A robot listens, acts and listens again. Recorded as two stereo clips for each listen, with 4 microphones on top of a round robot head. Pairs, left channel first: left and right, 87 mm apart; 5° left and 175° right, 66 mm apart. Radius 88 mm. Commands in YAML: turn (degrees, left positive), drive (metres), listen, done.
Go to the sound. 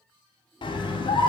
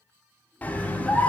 turn: 70
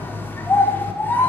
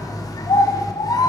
turn: 25
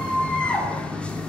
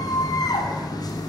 turn: 15
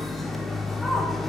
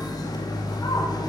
drive: 1.0
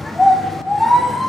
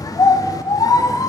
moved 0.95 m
drive: 1.0
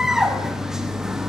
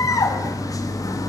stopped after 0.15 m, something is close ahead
done: "I am next to the scream."